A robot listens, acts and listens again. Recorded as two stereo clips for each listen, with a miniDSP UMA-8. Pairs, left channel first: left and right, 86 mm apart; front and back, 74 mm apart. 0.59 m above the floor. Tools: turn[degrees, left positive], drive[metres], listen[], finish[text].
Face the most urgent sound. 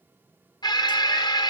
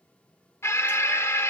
Thought: The alarm: 55° left.
Action: turn[55]
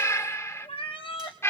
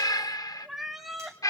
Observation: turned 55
Thought: The alarm is now 35° left.
Action: turn[35]
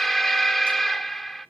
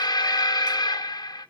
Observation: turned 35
Action: finish[Facing the alarm, under 1 m away.]